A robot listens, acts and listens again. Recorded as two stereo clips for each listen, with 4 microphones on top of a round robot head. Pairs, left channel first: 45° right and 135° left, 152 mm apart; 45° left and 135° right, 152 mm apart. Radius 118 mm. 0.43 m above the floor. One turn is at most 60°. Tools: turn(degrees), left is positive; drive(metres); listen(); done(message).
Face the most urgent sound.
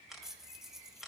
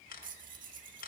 listen()
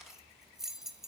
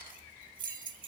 listen()
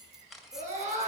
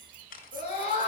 turn(degrees=60)
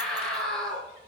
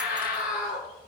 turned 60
turn(degrees=40)
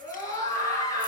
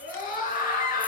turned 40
turn(degrees=20)
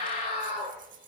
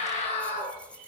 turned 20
done("Facing the scream.")